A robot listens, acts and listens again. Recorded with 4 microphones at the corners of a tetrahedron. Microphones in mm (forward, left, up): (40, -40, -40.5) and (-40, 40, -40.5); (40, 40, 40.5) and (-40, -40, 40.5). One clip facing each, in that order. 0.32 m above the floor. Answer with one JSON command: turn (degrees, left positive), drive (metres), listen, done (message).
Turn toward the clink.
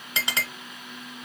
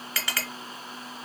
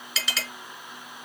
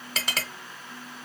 {"turn": -110}
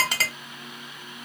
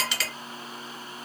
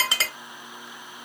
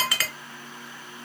{"turn": -15}
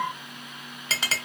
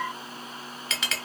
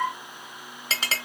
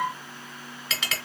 {"done": "Found it: a clink, straight ahead, under 1 m away."}